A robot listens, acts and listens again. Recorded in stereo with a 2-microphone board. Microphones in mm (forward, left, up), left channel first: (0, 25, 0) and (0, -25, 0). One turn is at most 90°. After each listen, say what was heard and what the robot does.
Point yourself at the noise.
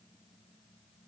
Keep listening.
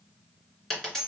Turn 30° left.
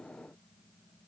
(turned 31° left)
Keep listening.
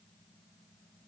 I heard a dropped coin, but can't make it out now. It was about 20° right or 135° left.